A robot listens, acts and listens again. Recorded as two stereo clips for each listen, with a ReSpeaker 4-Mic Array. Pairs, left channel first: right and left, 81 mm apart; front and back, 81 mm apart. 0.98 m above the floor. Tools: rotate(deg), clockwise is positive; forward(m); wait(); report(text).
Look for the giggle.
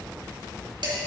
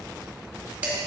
wait()
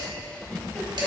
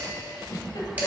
rotate(15)
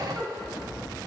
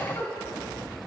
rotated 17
report("Facing the giggle.")